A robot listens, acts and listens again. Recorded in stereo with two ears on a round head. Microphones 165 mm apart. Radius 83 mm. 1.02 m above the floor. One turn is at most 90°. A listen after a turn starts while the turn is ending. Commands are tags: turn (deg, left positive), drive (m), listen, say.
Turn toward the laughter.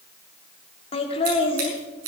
<turn deg="30"/>
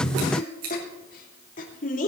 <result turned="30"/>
<turn deg="90"/>
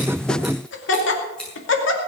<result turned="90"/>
<turn deg="75"/>
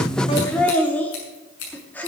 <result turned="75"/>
<turn deg="10"/>
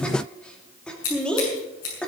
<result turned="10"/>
<say>Facing the laughter, 2 to 4 m away.</say>